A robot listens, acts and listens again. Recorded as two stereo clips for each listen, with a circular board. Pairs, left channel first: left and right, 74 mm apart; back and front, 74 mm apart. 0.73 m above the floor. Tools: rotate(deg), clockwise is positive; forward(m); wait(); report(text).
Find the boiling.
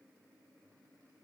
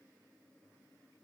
wait()
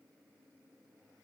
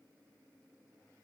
wait()
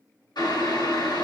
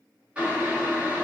rotate(-75)
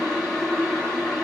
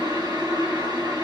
report("Found it: boiling, straight ahead.")